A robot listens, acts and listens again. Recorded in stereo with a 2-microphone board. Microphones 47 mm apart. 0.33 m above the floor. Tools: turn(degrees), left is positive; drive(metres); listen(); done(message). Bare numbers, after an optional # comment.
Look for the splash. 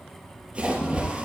# The splash: about 20° right or 160° right.
turn(-20)
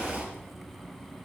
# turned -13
# So it is at 145° right.
turn(-145)
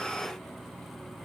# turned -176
# Nothing new. It was at 30° left.
turn(30)
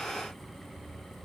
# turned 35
done("I heard a splash from this way, but can't make it out now.")